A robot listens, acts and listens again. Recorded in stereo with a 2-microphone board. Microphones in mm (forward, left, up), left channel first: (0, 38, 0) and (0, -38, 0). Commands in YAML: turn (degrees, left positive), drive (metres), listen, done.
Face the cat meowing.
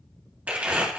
listen: true
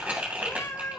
turn: 40
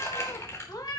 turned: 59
turn: 50
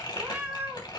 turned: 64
turn: -25
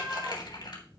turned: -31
done: "Found it: a cat meowing, straight ahead, 2 to 4 m away."